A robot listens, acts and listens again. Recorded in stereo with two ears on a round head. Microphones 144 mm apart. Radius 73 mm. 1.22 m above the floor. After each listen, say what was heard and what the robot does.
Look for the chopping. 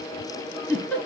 Keep listening.
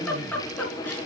Keep listening.
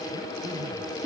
I can't make out chopping to turn to.